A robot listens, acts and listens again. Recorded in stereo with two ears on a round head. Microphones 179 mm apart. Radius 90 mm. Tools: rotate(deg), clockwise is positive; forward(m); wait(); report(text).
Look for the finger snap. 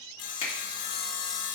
rotate(-30)
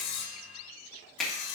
report("Found it: a finger snap, straight ahead, 2 to 4 m away.")